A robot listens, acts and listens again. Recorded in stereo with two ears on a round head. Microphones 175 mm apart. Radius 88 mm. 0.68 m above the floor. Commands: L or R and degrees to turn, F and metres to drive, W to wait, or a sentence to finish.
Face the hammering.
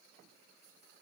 W
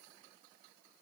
W
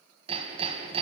R25
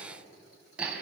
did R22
Found it: hammering, straight ahead, 2 to 4 m away.